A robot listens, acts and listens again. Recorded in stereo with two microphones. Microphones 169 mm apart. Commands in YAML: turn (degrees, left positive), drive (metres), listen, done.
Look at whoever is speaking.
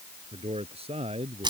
turn: -35
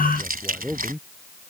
done: "Facing the man speaking."